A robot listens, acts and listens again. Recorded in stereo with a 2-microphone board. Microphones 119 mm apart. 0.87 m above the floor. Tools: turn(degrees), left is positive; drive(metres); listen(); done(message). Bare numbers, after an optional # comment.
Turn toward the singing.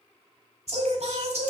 # The singing: about 70° right or 110° right.
turn(-70)
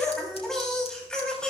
# So it is at 10° left.
turn(10)
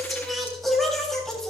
done("Facing the singing, 2 to 4 m away.")